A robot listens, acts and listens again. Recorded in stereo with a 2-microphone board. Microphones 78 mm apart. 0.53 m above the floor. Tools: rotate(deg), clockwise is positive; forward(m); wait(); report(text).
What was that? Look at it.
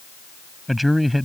rotate(-30)
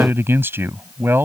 rotate(30)
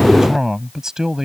report("Found it: a man speaking, straight ahead.")